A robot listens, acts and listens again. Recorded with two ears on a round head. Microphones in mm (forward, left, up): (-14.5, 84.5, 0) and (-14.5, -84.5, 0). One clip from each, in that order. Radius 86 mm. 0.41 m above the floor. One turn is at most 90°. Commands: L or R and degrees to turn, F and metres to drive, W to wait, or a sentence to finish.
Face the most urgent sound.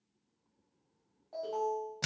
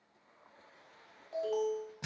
R65
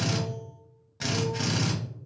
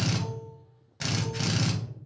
W
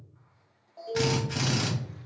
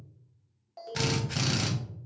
R40
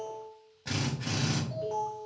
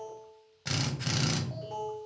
Found it: an alarm, straight ahead.